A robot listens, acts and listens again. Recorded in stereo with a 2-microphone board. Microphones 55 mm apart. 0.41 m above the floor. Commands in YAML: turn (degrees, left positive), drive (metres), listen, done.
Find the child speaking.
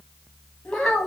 turn: 30
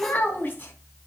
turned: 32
turn: 145
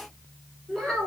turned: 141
turn: 10
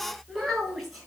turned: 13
done: "Facing the child speaking."